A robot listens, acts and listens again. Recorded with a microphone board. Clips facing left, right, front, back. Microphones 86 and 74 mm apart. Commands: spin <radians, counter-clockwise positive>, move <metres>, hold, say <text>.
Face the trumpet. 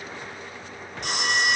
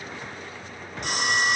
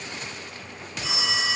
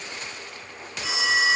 hold
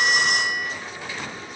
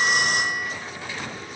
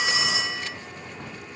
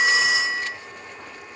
hold
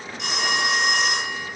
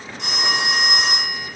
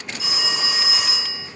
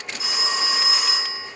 say I can't make out a trumpet, only a phone ringing.